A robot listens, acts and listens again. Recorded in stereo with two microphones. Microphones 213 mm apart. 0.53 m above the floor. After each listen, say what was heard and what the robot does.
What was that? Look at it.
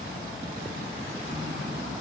Keep listening.
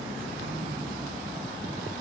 Keep listening.
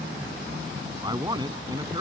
The man speaking: about 20° right or 160° right. Turn 20° right.
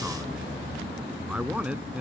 Turn 30° right.
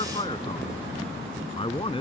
So it is at 25° left. Turn 25° left.
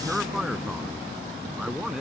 Facing the man speaking.